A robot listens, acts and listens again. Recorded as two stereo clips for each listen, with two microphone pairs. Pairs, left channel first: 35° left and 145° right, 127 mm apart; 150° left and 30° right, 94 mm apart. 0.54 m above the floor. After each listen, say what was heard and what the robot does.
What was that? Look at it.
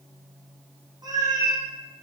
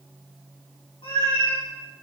The cat meowing: 160° left. Turn 160° left.
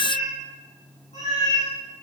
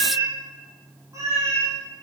The cat meowing is now 25° left. Turn 25° left.
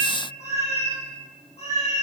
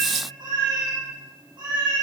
Facing the cat meowing, over 4 m away.